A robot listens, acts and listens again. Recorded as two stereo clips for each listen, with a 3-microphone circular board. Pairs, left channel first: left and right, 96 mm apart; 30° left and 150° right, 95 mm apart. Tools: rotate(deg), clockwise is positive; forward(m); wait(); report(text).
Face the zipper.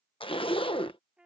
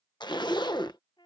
rotate(-70)
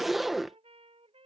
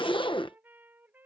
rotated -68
report("Facing the zipper.")